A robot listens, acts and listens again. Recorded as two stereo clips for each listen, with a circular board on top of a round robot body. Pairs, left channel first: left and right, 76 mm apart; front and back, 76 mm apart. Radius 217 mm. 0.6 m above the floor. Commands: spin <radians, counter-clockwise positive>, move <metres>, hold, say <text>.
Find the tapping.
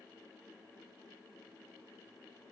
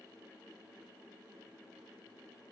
hold
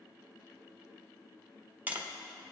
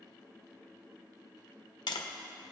spin -0.35
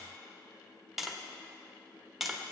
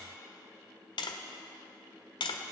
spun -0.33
say Found it: tapping, straight ahead.